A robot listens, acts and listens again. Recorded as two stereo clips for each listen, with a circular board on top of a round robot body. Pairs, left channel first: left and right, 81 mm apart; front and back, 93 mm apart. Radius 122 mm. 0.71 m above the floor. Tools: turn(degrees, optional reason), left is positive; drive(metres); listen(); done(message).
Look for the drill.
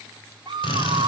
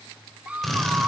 turn(degrees=85, reason="The drill: 85° left.")
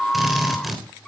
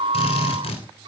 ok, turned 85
done("Found it: a drill, straight ahead, 2 to 4 m away.")